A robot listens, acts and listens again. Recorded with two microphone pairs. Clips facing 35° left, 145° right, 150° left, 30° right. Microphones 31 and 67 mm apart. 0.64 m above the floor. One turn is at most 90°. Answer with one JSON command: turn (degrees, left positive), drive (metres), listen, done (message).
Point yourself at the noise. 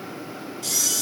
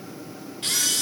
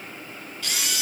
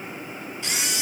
{"turn": -90}
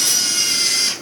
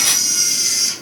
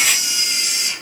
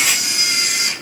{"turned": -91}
{"done": "Found it: a camera shutter, straight ahead."}